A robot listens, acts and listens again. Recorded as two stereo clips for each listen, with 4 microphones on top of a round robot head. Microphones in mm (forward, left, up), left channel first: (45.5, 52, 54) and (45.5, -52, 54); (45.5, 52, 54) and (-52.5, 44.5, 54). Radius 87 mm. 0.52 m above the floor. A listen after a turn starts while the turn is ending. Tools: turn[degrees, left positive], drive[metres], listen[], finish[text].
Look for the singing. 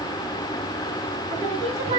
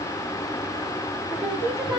Thought: The singing: 85° right.
Action: turn[-85]
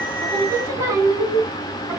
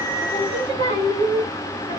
Thought: The singing is now 30° right.
Action: turn[-30]
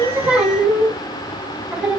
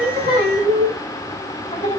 Thought: The singing is now 10° right.
Action: turn[-10]
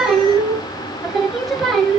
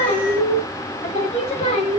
Action: finish[Found it: singing, straight ahead.]